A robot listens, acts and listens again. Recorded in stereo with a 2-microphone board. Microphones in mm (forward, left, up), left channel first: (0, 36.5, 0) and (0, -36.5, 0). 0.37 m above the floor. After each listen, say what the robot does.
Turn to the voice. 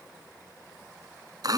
Keep listening.
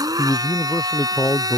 Turn 30° left.
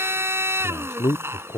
Turn 120° left.
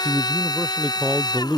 Turn 15° right.
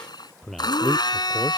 Found it: a man speaking, straight ahead.